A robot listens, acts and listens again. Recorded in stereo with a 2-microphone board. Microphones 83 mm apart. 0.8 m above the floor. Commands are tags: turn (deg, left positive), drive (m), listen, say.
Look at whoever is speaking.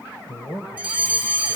<turn deg="65"/>
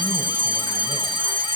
<listen/>
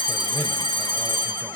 <listen/>
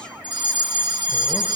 <say>I heard a man speaking, but can't make it out now. It was about straight ahead or 50° left.</say>